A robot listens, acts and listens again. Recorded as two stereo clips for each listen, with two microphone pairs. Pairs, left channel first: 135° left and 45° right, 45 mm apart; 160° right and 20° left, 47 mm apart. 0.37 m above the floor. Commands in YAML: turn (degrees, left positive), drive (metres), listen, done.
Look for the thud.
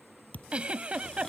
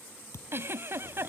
turn: -170
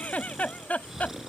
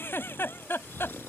done: "I heard a thud from this way, but can't make it out now."